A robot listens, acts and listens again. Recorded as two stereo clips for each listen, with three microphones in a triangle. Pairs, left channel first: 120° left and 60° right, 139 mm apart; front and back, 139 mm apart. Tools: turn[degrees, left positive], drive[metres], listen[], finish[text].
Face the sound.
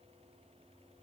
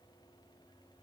Action: listen[]
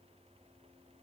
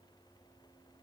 Action: listen[]
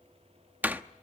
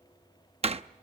Thought: The door slam: 135° right.
Action: turn[-135]
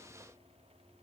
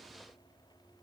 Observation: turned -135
Action: finish[I heard a door slam from this way, but can't make it out now.]